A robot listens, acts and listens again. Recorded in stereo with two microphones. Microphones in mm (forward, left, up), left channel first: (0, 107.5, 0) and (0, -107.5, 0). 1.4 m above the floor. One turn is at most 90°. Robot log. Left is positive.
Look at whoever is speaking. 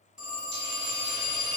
cmd idle
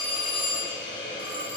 cmd idle
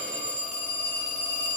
end: I can't make out anyone speaking, only a hiss and a phone ringing.